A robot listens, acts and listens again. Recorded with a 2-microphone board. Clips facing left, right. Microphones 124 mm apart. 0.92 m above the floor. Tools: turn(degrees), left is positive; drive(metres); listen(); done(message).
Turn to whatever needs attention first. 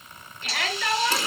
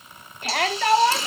turn(degrees=-60)
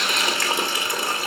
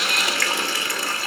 listen()
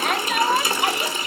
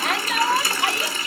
done("Facing the shout, 2 to 4 m away.")